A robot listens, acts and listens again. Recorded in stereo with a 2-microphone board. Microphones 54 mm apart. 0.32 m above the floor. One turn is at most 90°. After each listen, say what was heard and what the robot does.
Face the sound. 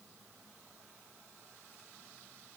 Keep listening.
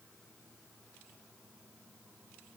Keep listening.
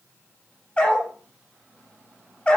The dog barking: about 25° left or 155° left. Turn 25° left.
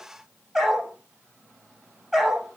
Facing the dog barking, over 4 m away.